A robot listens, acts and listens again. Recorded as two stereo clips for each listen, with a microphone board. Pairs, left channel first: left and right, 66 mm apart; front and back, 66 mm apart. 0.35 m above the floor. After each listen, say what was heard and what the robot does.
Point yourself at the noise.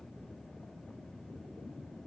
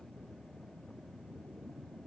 Keep listening.
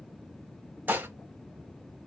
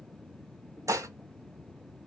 The dishes clattering: 150° right. Turn 150° right.
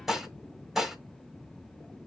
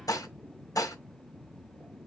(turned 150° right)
Found it: dishes clattering, straight ahead, 1 to 2 m away.